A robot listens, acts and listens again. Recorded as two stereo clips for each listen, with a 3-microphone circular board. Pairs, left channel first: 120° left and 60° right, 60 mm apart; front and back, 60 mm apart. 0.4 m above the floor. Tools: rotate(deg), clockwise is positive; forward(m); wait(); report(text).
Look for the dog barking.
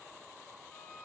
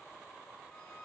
wait()
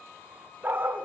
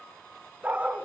rotate(115)
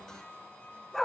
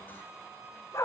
rotate(-40)
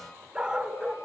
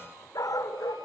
rotate(-20)
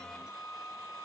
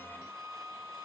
wait()
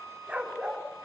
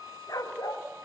rotate(-10)
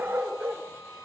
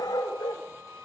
report("Found it: a dog barking, straight ahead, 2 to 4 m away.")